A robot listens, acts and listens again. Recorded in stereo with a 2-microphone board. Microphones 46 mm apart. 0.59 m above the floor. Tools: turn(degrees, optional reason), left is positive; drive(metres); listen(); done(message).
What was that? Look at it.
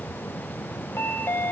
turn(degrees=70, reason="The chime: about 70° left or 110° left.")
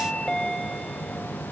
turn(degrees=10, reason="So it is at 10° left.")
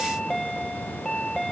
done("Found it: a chime, straight ahead.")